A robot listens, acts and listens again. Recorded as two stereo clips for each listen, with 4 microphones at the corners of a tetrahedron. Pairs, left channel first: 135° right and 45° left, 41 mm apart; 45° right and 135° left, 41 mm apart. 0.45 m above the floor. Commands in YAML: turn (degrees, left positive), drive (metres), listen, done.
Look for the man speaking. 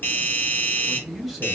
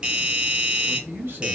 turn: 140
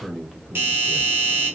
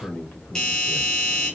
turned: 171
turn: -45
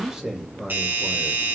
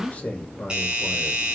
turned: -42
turn: -35
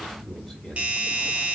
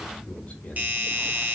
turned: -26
turn: -55
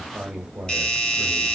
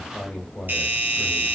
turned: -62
done: "Facing the man speaking, 1 to 2 m away."